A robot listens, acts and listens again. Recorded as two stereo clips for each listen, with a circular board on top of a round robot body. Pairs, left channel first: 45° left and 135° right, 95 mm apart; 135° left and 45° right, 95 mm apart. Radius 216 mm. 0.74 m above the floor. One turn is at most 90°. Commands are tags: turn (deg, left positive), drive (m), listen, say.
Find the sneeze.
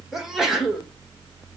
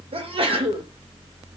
<turn deg="-50"/>
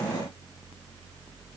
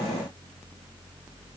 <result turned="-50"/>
<say>Facing where the sneeze came from. I can't hear it now.</say>